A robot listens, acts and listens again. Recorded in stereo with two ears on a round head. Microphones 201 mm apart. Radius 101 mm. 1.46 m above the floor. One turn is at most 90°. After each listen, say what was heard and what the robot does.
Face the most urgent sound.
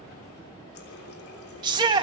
The shout: about 20° right or 160° right. Turn 20° right.
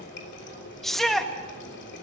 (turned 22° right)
Found it: a shout, straight ahead, 1 to 2 m away.